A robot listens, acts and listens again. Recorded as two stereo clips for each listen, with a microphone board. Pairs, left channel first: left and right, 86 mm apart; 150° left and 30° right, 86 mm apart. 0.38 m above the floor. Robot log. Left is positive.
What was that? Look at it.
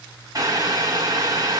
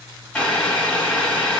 note: The boiling: 135° right.
cmd yaw -135
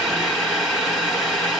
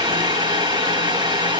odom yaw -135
end: Found it: boiling, straight ahead, 1 to 2 m away.